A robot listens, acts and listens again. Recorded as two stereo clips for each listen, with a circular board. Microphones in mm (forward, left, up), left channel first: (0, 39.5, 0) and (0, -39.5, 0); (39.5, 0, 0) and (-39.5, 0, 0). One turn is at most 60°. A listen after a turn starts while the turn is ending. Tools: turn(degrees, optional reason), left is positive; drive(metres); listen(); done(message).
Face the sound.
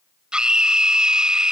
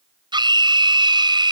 turn(degrees=-60, reason="The scream: 170° right.")
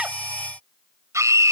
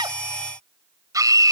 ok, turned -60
turn(degrees=-60, reason="The scream is now 140° right.")
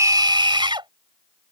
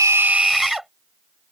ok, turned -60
turn(degrees=-60, reason="The scream is now 95° right.")
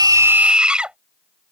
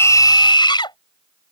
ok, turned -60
turn(degrees=-10, reason="The scream is now 10° right.")
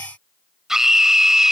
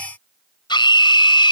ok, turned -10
done("Found it: a scream, straight ahead.")